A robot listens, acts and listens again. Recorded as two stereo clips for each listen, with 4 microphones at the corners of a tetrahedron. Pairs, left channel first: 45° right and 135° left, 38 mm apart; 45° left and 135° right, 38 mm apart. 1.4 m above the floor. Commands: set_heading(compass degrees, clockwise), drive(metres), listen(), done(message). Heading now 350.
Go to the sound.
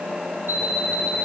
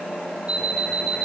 set_heading(190)
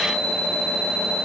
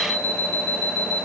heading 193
drive(1.0)
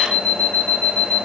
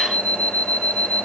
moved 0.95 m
drive(1.0)
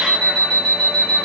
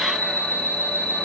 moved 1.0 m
drive(1.0)
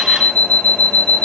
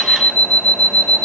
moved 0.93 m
drive(1.0)
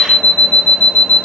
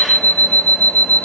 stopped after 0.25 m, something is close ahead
set_heading(183)
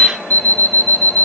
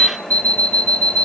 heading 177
done("Arrived at the alarm clock, straight ahead.")